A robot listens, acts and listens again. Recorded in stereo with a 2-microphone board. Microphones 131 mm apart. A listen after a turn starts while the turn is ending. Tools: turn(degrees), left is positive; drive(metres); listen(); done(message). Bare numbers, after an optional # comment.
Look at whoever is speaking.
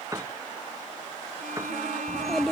turn(30)
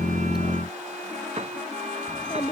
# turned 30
# So it is at 150° left.
turn(150)
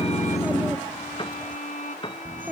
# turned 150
# The child speaking is now 15° right.
turn(-15)
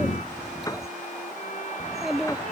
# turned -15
done("Facing the child speaking.")